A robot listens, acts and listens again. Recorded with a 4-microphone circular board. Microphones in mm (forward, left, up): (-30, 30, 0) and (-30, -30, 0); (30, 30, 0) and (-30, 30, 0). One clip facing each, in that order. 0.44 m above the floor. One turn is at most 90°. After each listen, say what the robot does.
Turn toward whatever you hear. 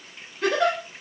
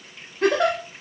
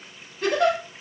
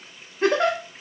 Turn 90° right.
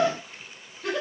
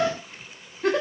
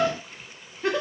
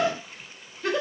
Turn 55° right.
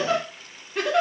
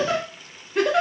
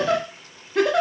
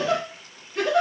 Found it: a giggle, straight ahead.